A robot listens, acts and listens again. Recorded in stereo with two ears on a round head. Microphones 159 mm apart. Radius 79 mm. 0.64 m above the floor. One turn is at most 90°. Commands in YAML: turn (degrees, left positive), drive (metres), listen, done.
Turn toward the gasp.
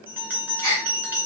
turn: -55
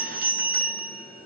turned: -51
listen: true
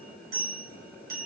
done: "I heard a gasp, but can't make it out now. It was about straight ahead or 75° right."